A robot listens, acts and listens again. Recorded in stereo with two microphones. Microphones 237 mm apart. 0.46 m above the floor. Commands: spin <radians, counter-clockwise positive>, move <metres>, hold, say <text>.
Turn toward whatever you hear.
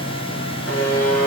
spin 1.57
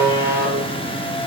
spin -0.26
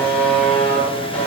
say Found it: a buzzer, straight ahead, over 4 m away.